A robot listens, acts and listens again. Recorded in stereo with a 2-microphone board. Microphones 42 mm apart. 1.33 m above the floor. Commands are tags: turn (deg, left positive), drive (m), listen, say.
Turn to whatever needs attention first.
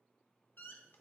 <listen/>
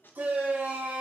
<turn deg="-65"/>
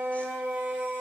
<turn deg="-55"/>
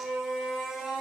<turn deg="-10"/>
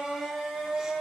<say>Facing the shout.</say>